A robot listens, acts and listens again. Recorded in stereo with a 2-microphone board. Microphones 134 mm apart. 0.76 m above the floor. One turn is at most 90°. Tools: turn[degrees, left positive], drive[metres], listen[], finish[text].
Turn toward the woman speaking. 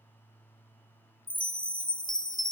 Action: listen[]
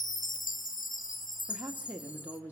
Action: turn[-30]
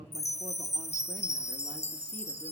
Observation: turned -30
Action: listen[]
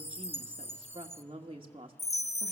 Thought: So it is at 135° right.
Action: turn[-90]
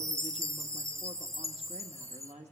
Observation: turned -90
Thought: The woman speaking is now 55° right.
Action: turn[-55]
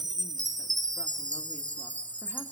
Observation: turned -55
Action: listen[]
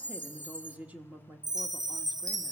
Thought: The woman speaking is now 10° right.
Action: turn[-10]
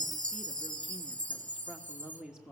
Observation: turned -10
Action: finish[Found it: a woman speaking, straight ahead.]